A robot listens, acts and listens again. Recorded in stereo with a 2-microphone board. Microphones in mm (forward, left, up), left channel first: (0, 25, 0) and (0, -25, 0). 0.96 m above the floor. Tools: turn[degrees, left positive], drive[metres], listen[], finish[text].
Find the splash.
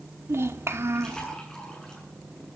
Action: turn[30]
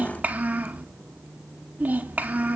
Action: listen[]
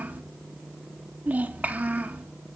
Action: finish[I heard a splash, but can't make it out now. It was about 20° right or 140° left.]